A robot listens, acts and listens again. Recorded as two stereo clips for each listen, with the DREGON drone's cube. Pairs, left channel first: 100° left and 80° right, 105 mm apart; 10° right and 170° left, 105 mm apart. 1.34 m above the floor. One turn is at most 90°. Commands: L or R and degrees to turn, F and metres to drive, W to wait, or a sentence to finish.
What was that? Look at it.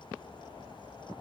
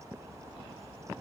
W
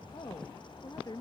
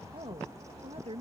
L90
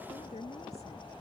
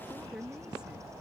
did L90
L85
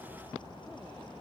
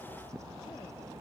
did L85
W
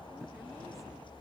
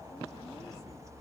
W
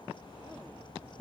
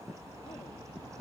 I heard a woman speaking from this way, but can't make it out now.